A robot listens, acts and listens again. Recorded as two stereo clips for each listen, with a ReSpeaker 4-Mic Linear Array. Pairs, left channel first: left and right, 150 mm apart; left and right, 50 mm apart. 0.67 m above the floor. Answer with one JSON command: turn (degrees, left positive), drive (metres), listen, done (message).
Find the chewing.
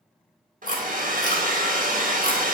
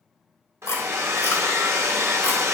{"turn": 55}
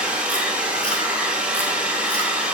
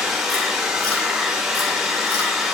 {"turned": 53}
{"listen": true}
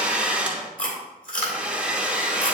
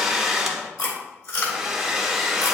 {"turn": 65}
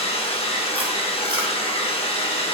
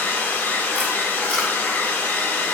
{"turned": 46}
{"turn": 20}
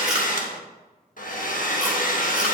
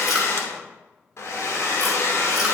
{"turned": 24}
{"listen": true}
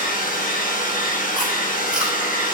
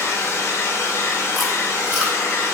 {"done": "I heard chewing from this way, but can't make it out now."}